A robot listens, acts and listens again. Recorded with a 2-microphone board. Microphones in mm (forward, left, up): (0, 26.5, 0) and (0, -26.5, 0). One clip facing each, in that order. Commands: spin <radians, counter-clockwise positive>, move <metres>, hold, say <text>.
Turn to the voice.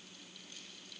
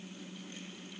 hold
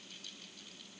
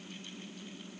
hold
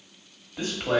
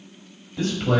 spin 0.52
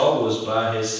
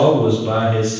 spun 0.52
spin -0.44
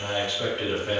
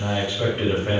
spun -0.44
spin -0.52
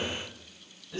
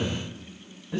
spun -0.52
spin -0.61
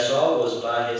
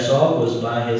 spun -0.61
spin -0.26
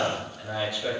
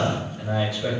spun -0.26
say Found it: a man speaking, straight ahead, 1 to 2 m away.